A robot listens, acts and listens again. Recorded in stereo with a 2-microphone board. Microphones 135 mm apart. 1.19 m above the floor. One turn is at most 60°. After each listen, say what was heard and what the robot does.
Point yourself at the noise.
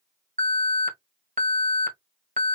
Turn 60° right.
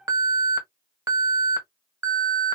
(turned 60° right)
So it is at 25° right. Turn 25° right.
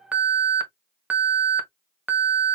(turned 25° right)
The alarm is now 10° right. Turn 10° right.
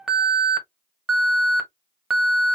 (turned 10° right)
Facing the alarm, 1 to 2 m away.